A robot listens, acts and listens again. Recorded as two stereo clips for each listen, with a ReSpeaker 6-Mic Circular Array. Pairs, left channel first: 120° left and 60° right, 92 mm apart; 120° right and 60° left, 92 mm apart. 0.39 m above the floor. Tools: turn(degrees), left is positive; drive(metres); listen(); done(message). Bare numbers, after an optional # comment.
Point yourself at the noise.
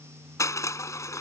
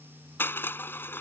# The crushing: 175° left.
turn(175)
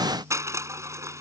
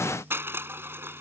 done("Facing the crushing.")